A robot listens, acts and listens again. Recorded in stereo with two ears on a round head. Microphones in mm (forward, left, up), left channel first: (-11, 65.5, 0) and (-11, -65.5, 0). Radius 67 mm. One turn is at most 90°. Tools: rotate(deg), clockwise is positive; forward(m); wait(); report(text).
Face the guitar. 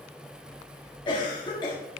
wait()
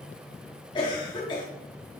wait()
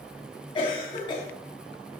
report("I can't make out a guitar to turn to.")